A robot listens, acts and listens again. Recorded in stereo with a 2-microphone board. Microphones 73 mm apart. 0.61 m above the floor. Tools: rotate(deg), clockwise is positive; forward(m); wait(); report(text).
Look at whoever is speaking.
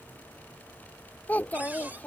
rotate(-25)
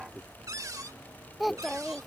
report("Facing the child speaking.")